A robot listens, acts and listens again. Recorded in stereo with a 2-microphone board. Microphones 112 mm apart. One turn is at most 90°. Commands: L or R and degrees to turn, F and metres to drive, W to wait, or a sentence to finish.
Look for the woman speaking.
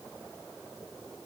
W
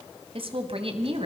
R60
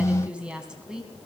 Facing the woman speaking.